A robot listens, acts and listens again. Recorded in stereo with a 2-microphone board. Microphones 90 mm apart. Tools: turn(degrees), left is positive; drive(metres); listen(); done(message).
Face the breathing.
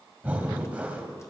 turn(degrees=-20)
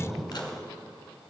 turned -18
done("Found it: breathing, straight ahead, 1 to 2 m away.")